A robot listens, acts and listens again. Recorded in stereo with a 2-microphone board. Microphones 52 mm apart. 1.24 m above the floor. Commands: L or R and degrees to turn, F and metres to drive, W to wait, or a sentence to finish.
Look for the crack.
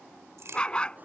R60
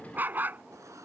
W
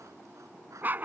I heard a crack, but can't make it out now. It was about straight ahead or 60° right.